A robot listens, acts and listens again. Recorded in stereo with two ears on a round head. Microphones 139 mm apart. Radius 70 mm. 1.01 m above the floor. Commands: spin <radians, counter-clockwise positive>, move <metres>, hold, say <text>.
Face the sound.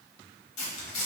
spin 0.87
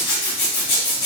spin 1.40
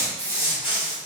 say Facing the zipper, 1 to 2 m away.